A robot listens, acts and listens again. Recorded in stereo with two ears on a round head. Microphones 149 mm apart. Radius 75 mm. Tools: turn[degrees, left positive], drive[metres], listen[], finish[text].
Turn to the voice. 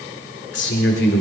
Thought: The man speaking: about 70° left or 110° left.
Action: turn[70]
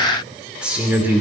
Thought: So it is at 10° right.
Action: turn[-10]
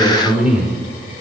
Action: finish[Facing the man speaking, over 4 m away.]